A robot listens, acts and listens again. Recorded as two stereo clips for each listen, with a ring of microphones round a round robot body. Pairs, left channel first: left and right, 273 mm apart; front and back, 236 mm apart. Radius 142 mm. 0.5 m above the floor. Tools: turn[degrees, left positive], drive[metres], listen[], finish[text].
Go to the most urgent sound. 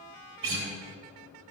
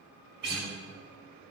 Action: listen[]
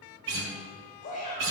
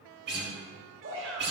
Thought: The shout: 155° left.
Action: turn[155]
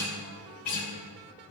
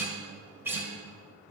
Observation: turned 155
Action: listen[]
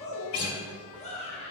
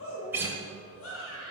Thought: The shout is now 25° left.
Action: turn[25]
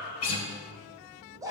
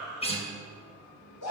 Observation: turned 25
Thought: The shout is now 10° right.
Action: turn[-10]
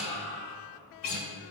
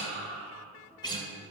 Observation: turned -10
Action: drive[1.0]
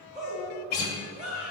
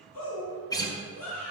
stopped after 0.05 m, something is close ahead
Action: finish[Blocked. The shout is further on, straight ahead.]